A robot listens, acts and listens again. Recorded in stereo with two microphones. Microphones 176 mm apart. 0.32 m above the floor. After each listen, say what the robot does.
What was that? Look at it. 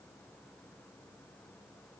Keep listening.
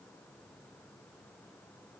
Keep listening.
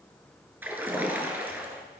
Turn 30° right.
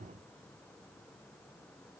Keep listening.
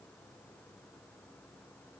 I heard a splash, but can't make it out now. It was about 20° left or 140° right.